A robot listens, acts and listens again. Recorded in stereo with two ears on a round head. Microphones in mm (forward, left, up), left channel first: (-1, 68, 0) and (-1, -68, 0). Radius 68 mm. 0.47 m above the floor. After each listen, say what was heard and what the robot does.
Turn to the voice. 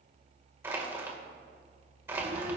The child speaking: about 65° right or 115° right. Turn 65° right.
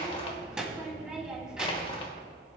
Facing the child speaking.